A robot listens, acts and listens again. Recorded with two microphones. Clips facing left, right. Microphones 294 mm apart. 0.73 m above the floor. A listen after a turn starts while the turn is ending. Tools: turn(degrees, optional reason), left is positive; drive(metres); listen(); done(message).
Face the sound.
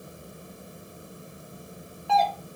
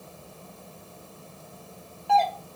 turn(degrees=30)
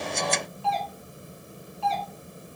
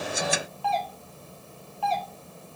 turn(degrees=150, reason="So it is at 150° left.")
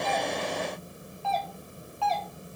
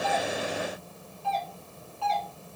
turn(degrees=-30, reason="The doorbell is now 30° right.")
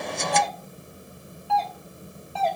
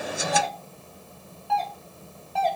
done("Facing the doorbell.")